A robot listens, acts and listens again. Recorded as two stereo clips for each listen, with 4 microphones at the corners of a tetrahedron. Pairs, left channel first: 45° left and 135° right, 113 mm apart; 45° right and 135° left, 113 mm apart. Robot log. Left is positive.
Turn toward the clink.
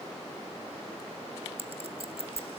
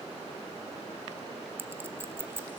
note: The clink: 155° right.
cmd yaw -155
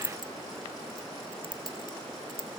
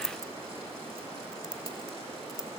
note: The clink is now 10° left.
cmd yaw +10
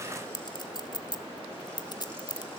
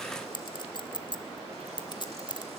end: Found it: a clink, straight ahead, under 1 m away.